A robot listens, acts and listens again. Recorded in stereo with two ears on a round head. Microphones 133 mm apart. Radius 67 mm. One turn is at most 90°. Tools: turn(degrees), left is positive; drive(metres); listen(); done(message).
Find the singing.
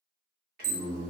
turn(degrees=-65)
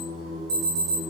turn(degrees=-40)
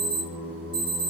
turn(degrees=-20)
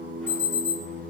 turn(degrees=-20)
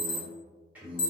turn(degrees=-10)
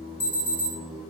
done("Found it: singing, straight ahead.")